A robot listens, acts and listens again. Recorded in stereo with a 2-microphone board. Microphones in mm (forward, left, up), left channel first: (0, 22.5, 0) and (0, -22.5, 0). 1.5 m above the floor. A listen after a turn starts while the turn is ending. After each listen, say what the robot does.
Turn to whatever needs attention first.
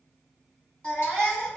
Turn 20° left.
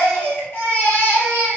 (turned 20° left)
Turn 135° left.
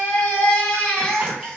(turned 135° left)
Turn 25° left.
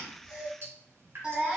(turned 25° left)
Turn 20° right.
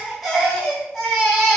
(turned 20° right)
Found it: a baby crying, straight ahead, 1 to 2 m away.